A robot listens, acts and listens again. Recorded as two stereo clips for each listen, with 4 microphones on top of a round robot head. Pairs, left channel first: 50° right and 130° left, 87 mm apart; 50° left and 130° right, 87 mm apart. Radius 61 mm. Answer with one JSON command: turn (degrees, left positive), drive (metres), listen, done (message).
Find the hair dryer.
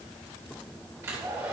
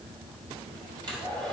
{"turn": -170}
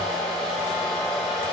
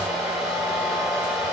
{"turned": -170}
{"turn": -40}
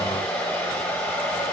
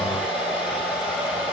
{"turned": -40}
{"turn": 10}
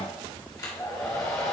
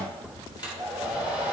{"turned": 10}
{"done": "Found it: a hair dryer, straight ahead, 2 to 4 m away."}